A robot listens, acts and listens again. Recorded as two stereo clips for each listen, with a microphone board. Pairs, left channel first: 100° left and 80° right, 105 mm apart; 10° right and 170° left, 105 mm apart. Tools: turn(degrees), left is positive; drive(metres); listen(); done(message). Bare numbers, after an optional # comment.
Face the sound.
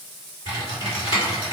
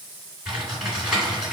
# The typing on a keyboard: 85° left.
turn(85)
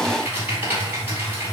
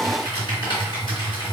# The typing on a keyboard is now 10° right.
turn(-10)
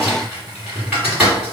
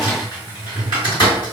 done("Facing the typing on a keyboard.")